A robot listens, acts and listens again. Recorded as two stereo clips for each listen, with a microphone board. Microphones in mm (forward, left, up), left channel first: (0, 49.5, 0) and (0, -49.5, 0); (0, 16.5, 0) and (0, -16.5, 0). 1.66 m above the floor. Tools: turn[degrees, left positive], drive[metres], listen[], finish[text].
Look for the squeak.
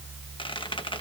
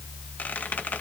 Thought: The squeak: about 60° left or 120° left.
Action: turn[60]
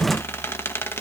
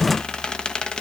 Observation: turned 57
Thought: So it is at 30° left.
Action: turn[30]
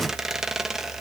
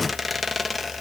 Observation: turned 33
Action: finish[Facing the squeak.]